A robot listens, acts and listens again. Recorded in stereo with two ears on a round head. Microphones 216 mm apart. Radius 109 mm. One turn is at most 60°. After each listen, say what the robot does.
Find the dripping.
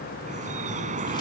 Turn 35° right.
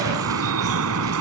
Turn 60° right.
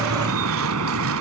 Turn 60° right.
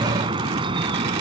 Turn 20° right.
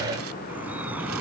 Facing the dripping.